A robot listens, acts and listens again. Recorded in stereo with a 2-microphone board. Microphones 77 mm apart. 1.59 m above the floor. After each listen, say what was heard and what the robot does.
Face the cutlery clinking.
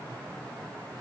Keep listening.
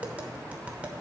Keep listening.
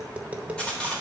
Turn 30° left.
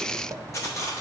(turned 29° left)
So it is at 135° left. Turn 135° left.
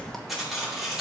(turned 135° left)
Facing the cutlery clinking.